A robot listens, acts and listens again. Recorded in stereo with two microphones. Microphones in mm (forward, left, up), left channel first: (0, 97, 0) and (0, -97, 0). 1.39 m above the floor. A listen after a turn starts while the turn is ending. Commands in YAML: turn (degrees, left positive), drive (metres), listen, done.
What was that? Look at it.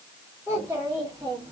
turn: -20
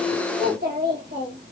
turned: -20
turn: -120
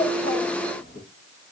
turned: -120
turn: 75
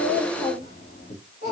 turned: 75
turn: 55
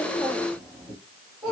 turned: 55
done: "Facing the child speaking."